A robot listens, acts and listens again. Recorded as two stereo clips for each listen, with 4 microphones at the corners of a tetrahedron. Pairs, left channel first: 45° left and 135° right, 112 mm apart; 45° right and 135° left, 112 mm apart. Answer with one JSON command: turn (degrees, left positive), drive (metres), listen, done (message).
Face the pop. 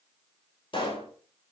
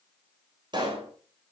{"turn": 85}
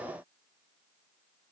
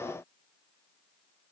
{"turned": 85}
{"done": "Facing where the pop came from. I can't hear it now."}